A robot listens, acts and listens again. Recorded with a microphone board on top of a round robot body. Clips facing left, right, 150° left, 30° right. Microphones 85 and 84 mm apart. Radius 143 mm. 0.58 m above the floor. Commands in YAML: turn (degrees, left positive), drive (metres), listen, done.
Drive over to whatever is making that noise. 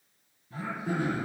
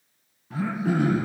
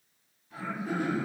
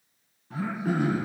turn: -60
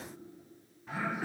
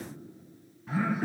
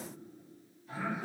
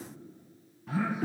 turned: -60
drive: 1.0
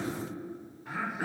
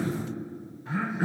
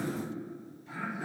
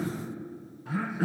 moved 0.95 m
drive: 1.0
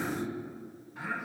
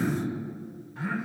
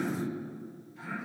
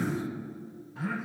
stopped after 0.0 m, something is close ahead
turn: 10
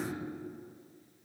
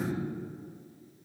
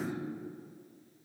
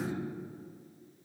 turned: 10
done: "Arrived at the throat clearing, straight ahead."